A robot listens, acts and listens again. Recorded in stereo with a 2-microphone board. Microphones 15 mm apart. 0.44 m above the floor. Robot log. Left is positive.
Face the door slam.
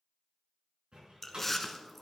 note: The door slam: about 75° right or 105° right.
cmd yaw -75
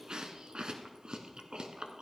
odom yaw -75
cmd idle
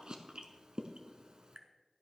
end: I heard a door slam, but can't make it out now. It was about straight ahead or 30° right.